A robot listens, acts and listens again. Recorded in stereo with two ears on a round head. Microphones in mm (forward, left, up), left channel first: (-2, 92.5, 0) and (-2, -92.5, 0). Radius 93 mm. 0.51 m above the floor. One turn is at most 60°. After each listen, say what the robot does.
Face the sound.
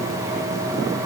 Keep listening.
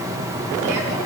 Keep listening.
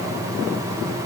I can't make out anything to turn to.